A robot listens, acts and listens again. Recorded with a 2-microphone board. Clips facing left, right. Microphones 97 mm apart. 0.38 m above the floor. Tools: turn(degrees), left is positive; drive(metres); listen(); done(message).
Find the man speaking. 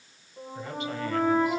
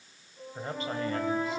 turn(degrees=-35)
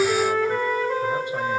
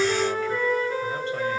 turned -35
listen()
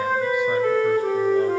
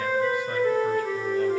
listen()
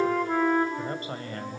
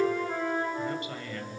turn(degrees=40)
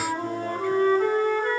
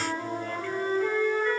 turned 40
listen()
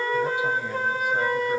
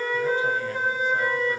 listen()
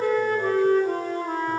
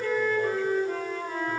done("Facing where the man speaking came from. I can't hear it now.")